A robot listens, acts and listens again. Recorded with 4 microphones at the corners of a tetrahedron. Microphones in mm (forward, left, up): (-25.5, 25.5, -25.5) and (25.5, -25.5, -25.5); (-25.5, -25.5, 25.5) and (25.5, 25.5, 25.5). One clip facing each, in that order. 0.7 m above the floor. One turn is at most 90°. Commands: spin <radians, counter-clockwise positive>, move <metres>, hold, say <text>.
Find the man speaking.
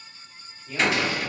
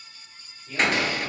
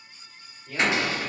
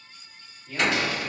spin -1.57
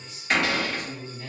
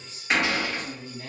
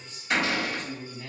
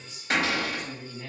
spin -0.26
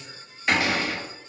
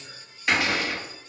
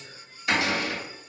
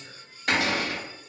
spin 0.17
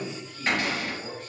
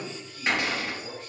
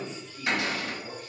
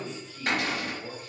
spin 1.57
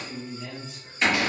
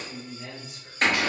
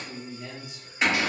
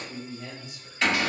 spin 0.17
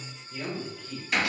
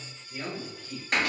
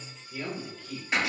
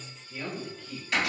say Facing the man speaking.